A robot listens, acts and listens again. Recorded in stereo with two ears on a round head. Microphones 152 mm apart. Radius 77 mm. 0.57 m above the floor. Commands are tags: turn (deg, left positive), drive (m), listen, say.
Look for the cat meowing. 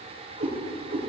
<turn deg="-70"/>
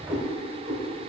<turn deg="-50"/>
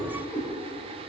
<turn deg="-10"/>
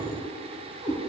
<turn deg="-20"/>
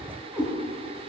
<turn deg="-10"/>
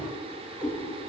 <turn deg="-10"/>
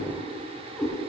<say>Facing the cat meowing, 2 to 4 m away.</say>